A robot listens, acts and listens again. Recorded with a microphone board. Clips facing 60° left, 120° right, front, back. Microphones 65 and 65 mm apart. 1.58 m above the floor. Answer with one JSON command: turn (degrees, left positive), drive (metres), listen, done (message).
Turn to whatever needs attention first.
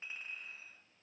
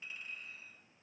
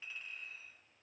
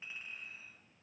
{"listen": true}
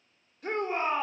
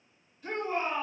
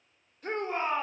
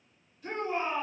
{"turn": 40}
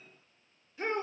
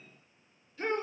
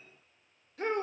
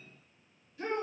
{"turn": -10}
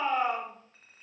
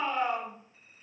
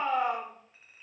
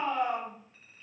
{"done": "Found it: a shout, straight ahead, 1 to 2 m away."}